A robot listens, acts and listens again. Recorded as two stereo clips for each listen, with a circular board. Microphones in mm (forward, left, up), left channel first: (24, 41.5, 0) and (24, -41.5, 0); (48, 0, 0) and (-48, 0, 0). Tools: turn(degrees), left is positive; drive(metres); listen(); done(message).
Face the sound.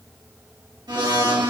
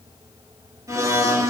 turn(degrees=-125)
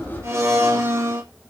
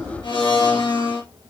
turn(degrees=-30)
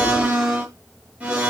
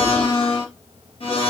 turn(degrees=-15)
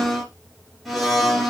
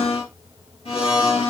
done("Facing the blender.")